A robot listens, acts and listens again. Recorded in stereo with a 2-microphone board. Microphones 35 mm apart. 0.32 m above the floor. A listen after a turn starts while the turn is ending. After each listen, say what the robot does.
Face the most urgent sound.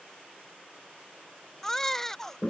Turn 30° left.
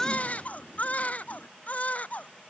Turn 135° left.
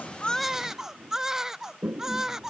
Turn 15° right.
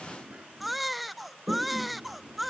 Facing the baby crying.